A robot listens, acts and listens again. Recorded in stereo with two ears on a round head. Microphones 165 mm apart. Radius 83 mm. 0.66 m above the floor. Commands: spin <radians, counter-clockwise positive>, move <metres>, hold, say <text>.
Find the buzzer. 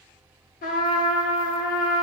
hold
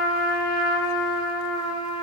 hold
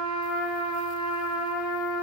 say I can't make out a buzzer, only a trumpet.